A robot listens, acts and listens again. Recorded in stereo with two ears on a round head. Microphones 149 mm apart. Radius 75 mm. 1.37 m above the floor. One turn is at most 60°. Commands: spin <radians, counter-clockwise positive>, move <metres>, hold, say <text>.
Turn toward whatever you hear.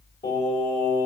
spin 0.52
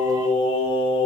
spin 1.05
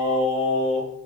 spin 1.05
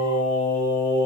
spin 1.05
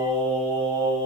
spin 0.17
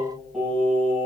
say Facing the singing, 2 to 4 m away.